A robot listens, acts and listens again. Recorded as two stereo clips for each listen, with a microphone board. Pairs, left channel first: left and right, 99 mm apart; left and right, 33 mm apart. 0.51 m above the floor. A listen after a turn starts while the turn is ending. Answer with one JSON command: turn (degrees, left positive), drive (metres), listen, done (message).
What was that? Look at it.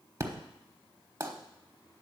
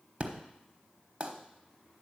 {"turn": -35}
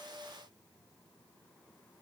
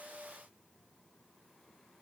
{"listen": true}
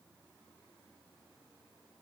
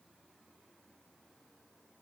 {"done": "I heard an explosion, but can't make it out now. It was about straight ahead or 110° right."}